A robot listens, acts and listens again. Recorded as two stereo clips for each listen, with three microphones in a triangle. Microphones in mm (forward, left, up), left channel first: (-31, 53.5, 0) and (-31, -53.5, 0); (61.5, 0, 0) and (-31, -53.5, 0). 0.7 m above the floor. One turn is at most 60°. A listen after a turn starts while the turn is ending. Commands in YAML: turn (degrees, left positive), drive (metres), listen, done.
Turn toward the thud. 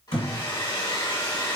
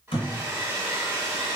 turn: 60
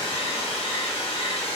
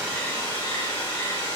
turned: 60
done: "Facing where the thud came from. I can't hear it now."